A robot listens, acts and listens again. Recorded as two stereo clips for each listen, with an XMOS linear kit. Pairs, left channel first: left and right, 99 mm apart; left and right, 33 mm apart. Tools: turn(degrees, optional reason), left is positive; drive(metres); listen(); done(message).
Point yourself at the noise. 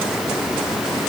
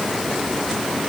listen()
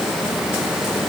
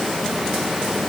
listen()
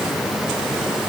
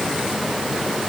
done("I can't make out anything to turn to.")